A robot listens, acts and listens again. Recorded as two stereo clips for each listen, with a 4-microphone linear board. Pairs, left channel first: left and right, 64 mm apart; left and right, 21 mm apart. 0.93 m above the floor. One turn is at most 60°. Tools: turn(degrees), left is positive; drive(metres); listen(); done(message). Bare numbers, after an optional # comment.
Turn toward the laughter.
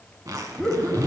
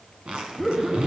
turn(30)
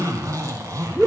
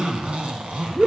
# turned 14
turn(30)
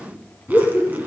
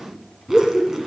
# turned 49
# So it is at 145° left.
turn(60)
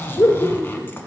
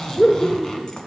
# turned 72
# The laughter is now 80° left.
turn(60)
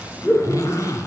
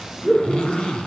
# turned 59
# The laughter is now 25° left.
turn(25)
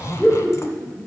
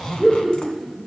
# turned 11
# The laughter is now 20° left.
turn(20)
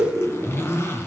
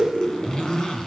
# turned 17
done("Facing the laughter, 2 to 4 m away.")